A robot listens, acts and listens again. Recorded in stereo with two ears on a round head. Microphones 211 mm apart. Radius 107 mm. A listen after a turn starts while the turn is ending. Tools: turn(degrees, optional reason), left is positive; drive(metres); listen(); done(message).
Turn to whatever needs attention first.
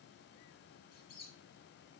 listen()
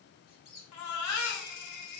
turn(degrees=90)
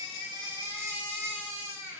turn(degrees=-10, reason="So it is at 10° right.")
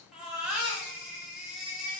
done("Found it: a baby crying, straight ahead, 1 to 2 m away.")